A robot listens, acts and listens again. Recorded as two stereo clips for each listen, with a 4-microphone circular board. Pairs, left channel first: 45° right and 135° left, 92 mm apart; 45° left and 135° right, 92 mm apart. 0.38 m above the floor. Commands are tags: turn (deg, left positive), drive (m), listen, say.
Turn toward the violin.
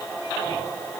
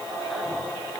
<listen/>
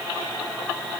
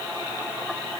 <listen/>
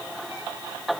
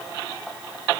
<say>I can't make out a violin to turn to.</say>